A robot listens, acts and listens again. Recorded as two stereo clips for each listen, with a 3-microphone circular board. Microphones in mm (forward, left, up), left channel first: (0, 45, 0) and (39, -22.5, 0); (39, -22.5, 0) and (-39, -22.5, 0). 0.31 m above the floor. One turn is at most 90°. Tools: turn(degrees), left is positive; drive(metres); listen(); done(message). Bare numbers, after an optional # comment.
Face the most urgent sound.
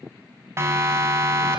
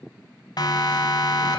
# The siren: 10° right.
turn(-10)
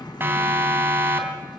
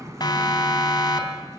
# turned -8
done("Found it: a siren, straight ahead.")